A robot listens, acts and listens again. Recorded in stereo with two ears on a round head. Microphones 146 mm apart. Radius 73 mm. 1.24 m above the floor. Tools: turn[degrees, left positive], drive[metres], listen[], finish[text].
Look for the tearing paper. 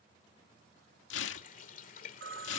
Action: turn[90]
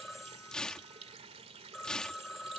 Action: finish[Facing the tearing paper.]